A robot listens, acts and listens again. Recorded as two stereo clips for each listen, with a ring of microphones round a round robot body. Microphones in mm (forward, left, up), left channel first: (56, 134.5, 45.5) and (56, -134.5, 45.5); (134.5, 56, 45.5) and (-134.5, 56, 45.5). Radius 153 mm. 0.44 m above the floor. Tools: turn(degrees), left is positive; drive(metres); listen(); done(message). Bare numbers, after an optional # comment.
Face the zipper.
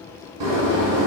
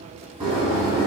listen()
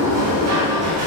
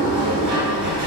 listen()
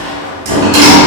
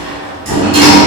done("I can't make out a zipper, only a sliding door.")